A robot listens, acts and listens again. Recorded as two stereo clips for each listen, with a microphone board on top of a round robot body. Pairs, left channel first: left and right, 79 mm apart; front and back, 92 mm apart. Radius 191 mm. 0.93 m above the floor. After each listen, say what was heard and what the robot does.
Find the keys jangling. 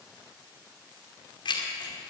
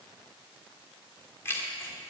The keys jangling: 65° left. Turn 65° left.
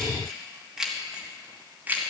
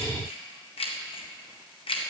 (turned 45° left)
The keys jangling is now 20° right. Turn 20° right.
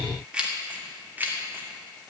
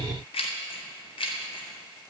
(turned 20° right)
The keys jangling is now 25° right. Turn 25° right.
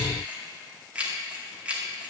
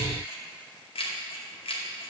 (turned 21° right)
The keys jangling is now 15° right. Turn 15° right.
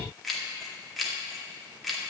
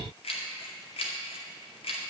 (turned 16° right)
Facing the keys jangling.